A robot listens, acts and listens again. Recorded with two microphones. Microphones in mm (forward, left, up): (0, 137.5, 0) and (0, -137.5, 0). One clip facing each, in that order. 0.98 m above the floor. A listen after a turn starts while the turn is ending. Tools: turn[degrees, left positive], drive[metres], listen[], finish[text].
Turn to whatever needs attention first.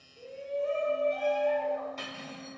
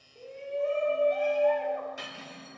Thought: The shout: about 60° right or 120° right.
Action: turn[-60]
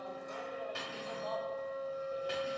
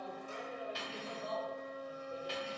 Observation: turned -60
Action: listen[]
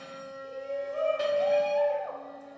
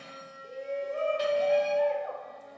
Thought: So it is at 30° right.
Action: turn[-30]
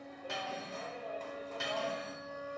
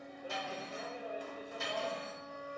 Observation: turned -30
Thought: The shout is now 15° right.
Action: turn[-15]
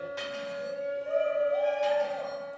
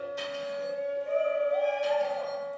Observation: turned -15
Action: finish[Facing the shout, under 1 m away.]